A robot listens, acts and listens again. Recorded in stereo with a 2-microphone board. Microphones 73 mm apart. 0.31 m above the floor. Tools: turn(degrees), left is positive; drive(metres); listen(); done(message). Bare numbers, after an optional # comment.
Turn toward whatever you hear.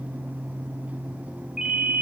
turn(-30)
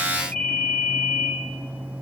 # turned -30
# So it is at 20° left.
turn(20)
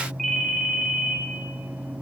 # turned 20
done("Found it: a ringtone, straight ahead.")